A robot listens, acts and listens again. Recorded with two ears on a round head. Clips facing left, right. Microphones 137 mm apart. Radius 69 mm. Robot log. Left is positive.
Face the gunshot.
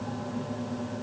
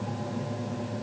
cmd idle
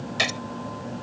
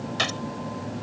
cmd yaw +30
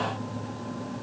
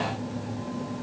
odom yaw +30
cmd idle
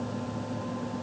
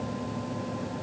end: I heard a gunshot, but can't make it out now. It was about 15° right or 135° left.